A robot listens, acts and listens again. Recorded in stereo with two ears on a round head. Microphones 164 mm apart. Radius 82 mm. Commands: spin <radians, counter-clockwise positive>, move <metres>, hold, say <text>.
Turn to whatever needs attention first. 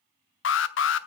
spin 1.57
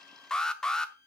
say Found it: an alarm, straight ahead, under 1 m away.